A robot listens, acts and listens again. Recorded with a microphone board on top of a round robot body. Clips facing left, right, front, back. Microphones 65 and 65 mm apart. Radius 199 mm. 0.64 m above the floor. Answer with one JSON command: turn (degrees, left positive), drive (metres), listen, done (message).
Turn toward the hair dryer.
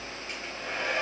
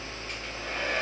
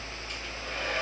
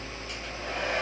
{"turn": 165}
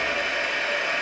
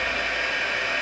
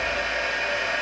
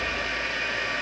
{"done": "Found it: a hair dryer, straight ahead."}